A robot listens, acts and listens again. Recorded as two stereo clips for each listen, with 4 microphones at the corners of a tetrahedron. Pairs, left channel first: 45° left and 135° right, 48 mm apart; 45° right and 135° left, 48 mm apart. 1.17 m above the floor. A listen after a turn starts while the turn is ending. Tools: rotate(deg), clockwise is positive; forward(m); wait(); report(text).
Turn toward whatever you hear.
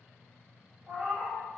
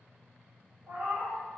rotate(-175)
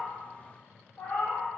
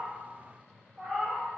rotate(-65)
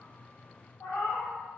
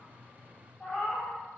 rotate(-30)
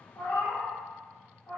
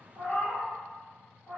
rotate(-10)
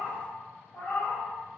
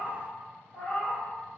report("Facing the cat meowing, under 1 m away.")